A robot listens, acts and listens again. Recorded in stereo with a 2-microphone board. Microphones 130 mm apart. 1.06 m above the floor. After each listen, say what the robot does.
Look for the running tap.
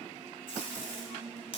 Keep listening.
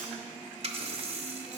Turn 50° right.
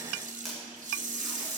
Turn 80° right.
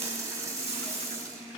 Turn 25° right.
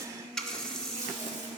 Facing the running tap, under 1 m away.